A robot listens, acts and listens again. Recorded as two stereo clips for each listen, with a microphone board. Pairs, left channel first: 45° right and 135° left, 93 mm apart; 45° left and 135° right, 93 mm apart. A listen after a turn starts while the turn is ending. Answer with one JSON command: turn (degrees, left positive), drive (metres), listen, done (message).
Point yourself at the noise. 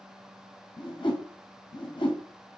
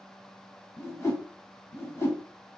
{"turn": -15}
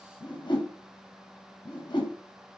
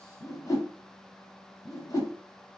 {"done": "Found it: a whoosh, straight ahead."}